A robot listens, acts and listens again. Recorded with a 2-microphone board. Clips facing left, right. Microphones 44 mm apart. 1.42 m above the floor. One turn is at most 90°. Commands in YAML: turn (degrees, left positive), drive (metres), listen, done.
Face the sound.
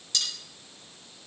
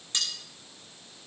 turn: -30
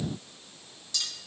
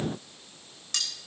turn: -90
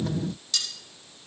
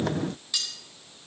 turn: -15
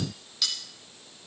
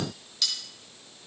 done: "Facing the cutlery clinking, over 4 m away."